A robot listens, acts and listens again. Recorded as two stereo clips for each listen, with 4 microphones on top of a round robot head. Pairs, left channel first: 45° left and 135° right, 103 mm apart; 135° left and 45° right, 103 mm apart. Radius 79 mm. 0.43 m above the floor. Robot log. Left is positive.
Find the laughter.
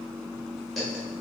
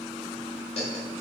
note: The laughter: 135° left.
cmd yaw +135
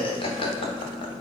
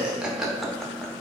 note: The laughter is now 45° left.
cmd yaw +45
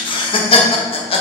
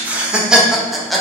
note: The laughter is now 45° left.
cmd yaw +45
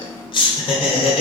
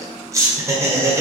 note: The laughter is now 15° left.
cmd yaw +15
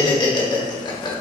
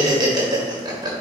end: Found it: laughter, straight ahead, 1 to 2 m away.